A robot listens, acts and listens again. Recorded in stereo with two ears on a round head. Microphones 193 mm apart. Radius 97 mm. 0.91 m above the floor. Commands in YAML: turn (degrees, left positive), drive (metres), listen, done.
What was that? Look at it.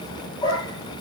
turn: 20
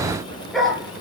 turn: 30
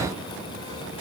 listen: true
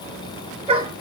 turn: -25
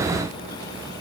listen: true
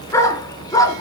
turn: 15
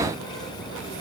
listen: true
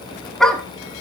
done: "Facing the dog barking."